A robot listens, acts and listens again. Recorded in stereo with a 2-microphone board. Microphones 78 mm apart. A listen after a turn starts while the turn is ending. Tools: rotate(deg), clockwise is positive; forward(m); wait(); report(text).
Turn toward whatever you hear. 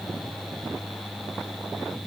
wait()
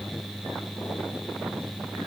wait()
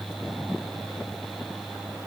report("I can't make out anything.")